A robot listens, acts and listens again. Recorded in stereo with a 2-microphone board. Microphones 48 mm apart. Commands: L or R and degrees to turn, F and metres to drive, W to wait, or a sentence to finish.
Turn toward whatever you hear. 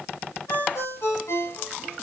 L90
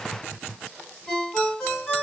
Found it: a ringtone, straight ahead, 2 to 4 m away.